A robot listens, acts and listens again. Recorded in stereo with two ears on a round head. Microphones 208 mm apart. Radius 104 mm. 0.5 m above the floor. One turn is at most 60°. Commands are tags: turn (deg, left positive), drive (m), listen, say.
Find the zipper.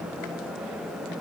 <listen/>
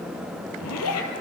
<turn deg="60"/>
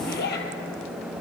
<turn deg="45"/>
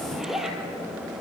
<say>Facing the zipper, 2 to 4 m away.</say>